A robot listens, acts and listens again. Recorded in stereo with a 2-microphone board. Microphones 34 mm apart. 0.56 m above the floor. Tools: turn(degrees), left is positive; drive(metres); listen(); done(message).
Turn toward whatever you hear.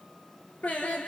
turn(degrees=40)
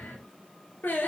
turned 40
turn(degrees=110)
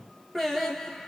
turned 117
done("Found it: singing, straight ahead.")